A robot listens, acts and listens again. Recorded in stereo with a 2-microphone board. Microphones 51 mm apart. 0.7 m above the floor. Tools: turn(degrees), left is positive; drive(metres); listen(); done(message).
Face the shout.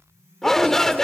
turn(degrees=30)
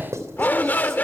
turn(degrees=140)
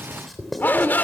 turn(degrees=35)
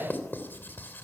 listen()
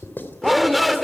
done("Found it: a shout, straight ahead, 1 to 2 m away.")